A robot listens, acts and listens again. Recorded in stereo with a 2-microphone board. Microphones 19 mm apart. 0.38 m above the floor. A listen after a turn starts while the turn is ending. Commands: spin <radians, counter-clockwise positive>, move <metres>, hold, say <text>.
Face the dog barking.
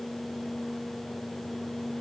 hold
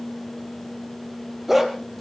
spin -0.52
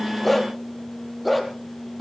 spin 0.52
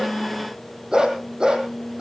spin -0.70
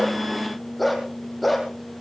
say Found it: a dog barking, straight ahead.